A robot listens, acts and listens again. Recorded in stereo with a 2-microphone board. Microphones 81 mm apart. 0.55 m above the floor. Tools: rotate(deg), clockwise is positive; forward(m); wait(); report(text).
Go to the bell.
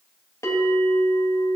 rotate(-40)
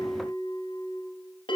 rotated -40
rotate(-100)
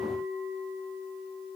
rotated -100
forward(1.0)
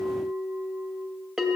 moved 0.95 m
forward(1.0)
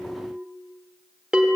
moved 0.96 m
rotate(10)
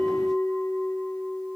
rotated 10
forward(1.0)
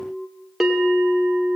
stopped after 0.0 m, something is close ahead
report("I am next to the bell.")